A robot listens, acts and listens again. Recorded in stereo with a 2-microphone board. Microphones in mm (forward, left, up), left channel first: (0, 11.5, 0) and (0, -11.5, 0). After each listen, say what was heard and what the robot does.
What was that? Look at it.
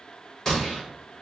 The gunshot: about 25° left or 155° left. Turn 25° left.
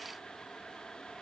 Keep listening.
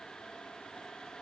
I heard a gunshot, but can't make it out now. It was about straight ahead or 130° left.